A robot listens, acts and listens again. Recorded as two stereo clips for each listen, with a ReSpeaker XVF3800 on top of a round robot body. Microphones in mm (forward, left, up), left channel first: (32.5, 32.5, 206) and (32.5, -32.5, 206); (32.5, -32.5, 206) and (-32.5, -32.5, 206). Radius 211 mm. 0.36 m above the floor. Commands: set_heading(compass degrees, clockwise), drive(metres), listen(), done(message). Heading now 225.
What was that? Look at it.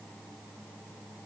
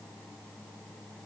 listen()
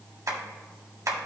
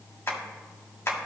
set_heading(275)
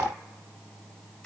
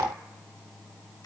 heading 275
set_heading(260)
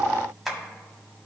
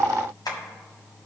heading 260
done("Facing the tapping.")